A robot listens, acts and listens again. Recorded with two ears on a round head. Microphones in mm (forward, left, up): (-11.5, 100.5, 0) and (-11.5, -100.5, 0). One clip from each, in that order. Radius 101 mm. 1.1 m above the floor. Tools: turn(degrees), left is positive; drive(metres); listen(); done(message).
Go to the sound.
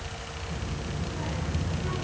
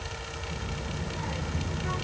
turn(degrees=-20)
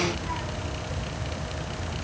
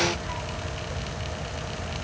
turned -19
drive(metres=1.0)
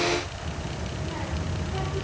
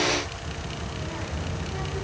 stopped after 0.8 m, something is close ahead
done("Blocked. The child speaking is further on, straight ahead.")